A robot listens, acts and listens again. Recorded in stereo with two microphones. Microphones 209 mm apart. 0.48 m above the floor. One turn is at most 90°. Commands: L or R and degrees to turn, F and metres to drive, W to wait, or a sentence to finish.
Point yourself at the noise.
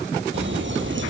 R65
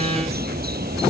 R50
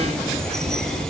Facing the bird.